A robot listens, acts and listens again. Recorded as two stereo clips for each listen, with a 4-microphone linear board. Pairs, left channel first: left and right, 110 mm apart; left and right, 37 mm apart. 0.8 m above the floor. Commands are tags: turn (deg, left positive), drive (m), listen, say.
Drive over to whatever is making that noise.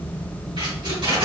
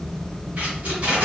<turn deg="-45"/>
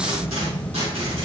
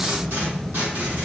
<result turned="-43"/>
<turn deg="-95"/>
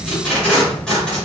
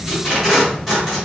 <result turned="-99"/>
<drive m="1.0"/>
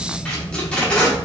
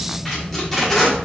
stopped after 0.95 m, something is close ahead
<turn deg="10"/>
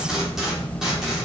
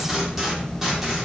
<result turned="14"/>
<say>Arrived at the tape being pulled, straight ahead.</say>